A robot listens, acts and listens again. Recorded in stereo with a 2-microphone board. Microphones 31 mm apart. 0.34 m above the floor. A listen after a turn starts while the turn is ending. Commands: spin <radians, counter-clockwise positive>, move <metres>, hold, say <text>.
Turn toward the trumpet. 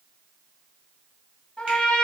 spin 0.44
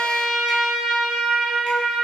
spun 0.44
say Facing the trumpet, under 1 m away.